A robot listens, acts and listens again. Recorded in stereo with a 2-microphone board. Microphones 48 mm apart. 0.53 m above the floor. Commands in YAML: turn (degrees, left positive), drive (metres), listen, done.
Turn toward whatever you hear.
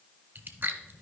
turn: -45
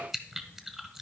done: "Facing the chewing."